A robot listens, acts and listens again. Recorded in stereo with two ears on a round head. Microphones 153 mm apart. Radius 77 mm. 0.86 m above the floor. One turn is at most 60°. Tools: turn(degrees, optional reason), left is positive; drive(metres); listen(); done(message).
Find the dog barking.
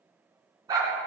turn(degrees=-25, reason="The dog barking: about 25° right or 155° right.")
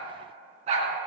turn(degrees=-60, reason="So it is at 140° right.")
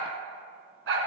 turn(degrees=-60, reason="The dog barking is now 85° right.")
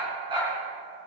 turn(degrees=-30, reason="The dog barking is now 30° right.")
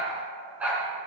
turn(degrees=-10, reason="The dog barking is now 10° right.")
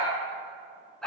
done("Facing the dog barking, 2 to 4 m away.")